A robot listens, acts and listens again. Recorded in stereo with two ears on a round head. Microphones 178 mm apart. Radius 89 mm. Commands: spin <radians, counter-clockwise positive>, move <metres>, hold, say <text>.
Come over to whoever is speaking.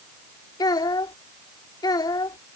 spin 0.35
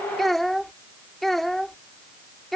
move 1.0
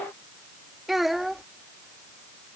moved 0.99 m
move 1.0
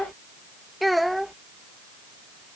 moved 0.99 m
move 1.0
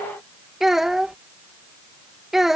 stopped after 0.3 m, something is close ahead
say I am next to the child speaking.